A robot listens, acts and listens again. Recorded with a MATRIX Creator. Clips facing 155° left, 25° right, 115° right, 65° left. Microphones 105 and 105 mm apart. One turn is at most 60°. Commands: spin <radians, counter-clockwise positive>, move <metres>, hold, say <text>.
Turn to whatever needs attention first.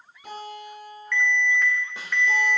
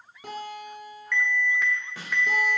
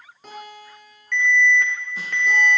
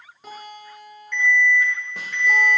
spin -1.05
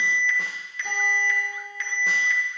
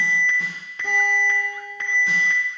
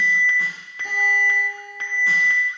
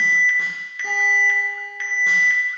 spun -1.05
spin -1.05
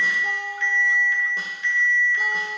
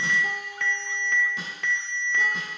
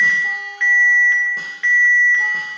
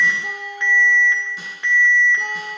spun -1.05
say Found it: an alarm, straight ahead, 1 to 2 m away.